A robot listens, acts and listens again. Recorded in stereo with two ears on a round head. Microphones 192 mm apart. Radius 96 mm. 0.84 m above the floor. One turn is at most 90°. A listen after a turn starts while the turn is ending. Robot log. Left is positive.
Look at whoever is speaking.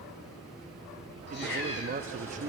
note: The man speaking: about 35° right or 145° right.
cmd yaw -35
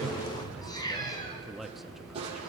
end: Found it: a man speaking, straight ahead, under 1 m away.